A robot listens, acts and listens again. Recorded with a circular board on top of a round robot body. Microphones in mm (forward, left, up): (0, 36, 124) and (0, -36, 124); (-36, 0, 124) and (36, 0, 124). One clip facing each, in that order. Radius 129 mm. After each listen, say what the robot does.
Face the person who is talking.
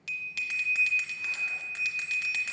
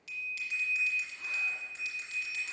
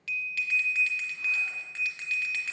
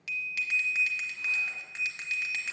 Keep listening.
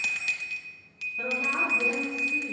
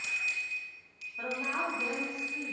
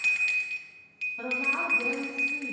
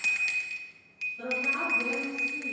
Turn 170° right.
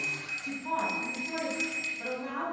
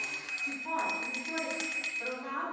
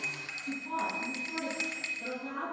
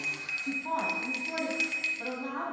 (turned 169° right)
Facing the woman speaking.